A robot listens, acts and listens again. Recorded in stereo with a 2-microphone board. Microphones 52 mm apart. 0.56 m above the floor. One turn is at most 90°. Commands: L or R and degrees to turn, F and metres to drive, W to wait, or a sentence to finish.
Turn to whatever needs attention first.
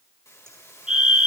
R30
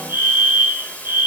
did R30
R90
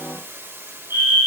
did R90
R50
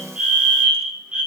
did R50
R20
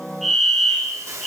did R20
Found it: a fire alarm, straight ahead, 2 to 4 m away.